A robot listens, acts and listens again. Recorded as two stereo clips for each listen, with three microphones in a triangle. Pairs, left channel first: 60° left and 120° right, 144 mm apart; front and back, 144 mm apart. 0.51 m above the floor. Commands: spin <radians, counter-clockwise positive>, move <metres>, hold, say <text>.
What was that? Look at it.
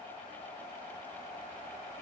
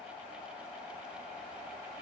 hold
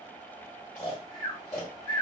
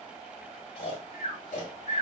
say Found it: snoring, straight ahead, 1 to 2 m away.